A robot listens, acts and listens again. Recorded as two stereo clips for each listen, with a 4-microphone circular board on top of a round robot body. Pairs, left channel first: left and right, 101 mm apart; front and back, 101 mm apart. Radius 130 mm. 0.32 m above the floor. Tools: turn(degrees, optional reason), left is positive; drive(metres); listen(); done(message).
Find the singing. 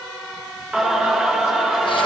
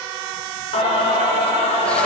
done("Facing the singing.")